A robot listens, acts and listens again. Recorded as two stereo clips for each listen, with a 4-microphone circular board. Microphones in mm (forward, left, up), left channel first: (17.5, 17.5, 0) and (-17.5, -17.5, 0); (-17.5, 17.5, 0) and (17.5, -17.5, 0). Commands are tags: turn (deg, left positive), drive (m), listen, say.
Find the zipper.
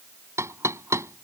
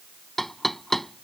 <listen/>
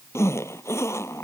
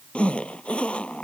<turn deg="65"/>
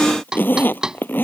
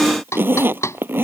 <say>Facing the zipper.</say>